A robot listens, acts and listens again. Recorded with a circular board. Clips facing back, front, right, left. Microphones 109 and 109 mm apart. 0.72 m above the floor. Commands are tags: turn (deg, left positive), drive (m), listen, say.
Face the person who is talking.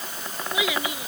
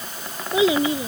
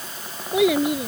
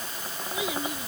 <turn deg="-60"/>
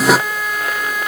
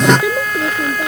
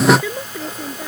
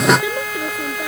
<turn deg="15"/>
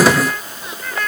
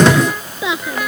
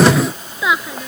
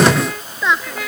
<say>Facing the child speaking.</say>